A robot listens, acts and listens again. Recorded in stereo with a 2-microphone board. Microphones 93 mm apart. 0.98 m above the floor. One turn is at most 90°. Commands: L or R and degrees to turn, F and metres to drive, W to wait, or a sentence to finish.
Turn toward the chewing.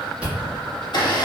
R30
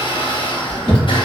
R90
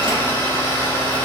R40
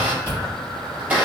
R25
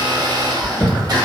L10
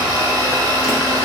W
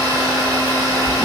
W
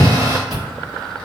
Found it: chewing, straight ahead, 1 to 2 m away.